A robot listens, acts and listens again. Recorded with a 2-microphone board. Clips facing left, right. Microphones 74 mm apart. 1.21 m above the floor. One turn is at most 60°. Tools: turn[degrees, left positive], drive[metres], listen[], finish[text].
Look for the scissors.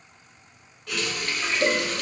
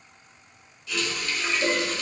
Action: listen[]
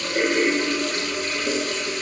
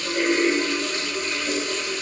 Action: listen[]
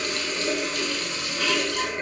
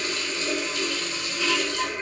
Action: finish[I can't make out scissors to turn to.]